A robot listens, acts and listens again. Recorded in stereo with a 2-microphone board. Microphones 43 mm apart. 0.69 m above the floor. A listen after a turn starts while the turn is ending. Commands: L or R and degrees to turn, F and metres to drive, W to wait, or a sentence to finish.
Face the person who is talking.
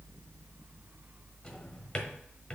W
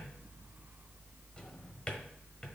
W
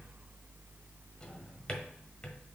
I can't make out anyone speaking to turn to.